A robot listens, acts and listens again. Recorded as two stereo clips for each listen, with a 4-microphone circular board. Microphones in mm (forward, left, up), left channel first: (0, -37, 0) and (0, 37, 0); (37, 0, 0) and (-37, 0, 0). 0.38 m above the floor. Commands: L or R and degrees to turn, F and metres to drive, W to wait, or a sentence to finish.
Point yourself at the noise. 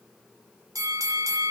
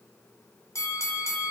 L50
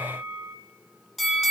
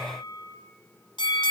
Facing the bell.